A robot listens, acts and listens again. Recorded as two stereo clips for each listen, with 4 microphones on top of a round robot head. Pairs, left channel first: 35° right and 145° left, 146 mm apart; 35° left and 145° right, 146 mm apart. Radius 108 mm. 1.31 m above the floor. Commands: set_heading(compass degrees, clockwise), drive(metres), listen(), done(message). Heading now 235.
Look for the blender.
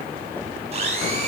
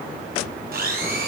set_heading(40)
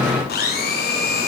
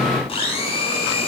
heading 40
set_heading(60)
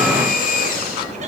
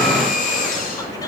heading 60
done("Found it: a blender, straight ahead, over 4 m away.")